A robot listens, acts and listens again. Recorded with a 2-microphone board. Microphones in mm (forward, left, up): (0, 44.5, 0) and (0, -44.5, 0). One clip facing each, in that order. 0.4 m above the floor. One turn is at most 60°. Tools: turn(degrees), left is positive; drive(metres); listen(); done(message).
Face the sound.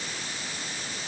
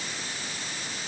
listen()
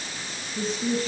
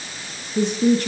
turn(degrees=-60)
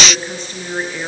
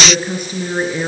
turn(degrees=-10)
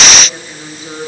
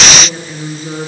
done("Facing the woman speaking, over 4 m away.")